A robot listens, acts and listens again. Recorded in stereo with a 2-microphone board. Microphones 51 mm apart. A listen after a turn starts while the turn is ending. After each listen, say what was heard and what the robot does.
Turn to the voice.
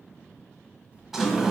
The child speaking: about 25° right or 155° right. Turn 25° right.
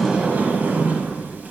Keep listening.
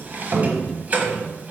Keep listening.
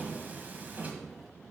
I heard a child speaking, but can't make it out now. It was about straight ahead or 130° right.